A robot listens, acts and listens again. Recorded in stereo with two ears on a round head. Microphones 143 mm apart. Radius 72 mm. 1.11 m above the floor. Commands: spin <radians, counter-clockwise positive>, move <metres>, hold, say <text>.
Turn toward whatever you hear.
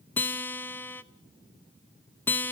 spin 0.52
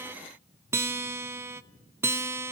spin -0.26
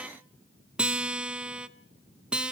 say Found it: a guitar, straight ahead, under 1 m away.